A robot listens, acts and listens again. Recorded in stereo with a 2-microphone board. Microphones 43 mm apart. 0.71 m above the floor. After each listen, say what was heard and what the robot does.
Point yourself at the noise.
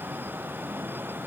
Keep listening.
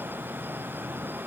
Keep listening.
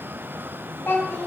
The child speaking: about 55° left or 125° left. Turn 55° left.
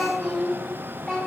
Found it: a child speaking, straight ahead.